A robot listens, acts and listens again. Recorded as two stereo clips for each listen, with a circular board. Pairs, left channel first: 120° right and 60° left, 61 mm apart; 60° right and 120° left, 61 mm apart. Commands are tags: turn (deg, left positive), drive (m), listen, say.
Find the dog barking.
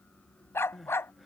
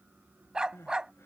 <turn deg="-165"/>
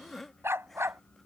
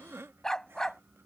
<turn deg="20"/>
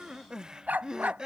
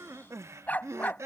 <say>Facing the dog barking.</say>